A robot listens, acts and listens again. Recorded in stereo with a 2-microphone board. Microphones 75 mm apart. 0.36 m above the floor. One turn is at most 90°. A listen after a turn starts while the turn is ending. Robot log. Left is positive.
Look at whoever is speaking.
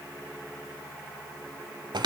cmd idle
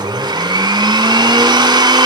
cmd idle
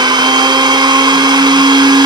end: I can't make out anyone speaking to turn to.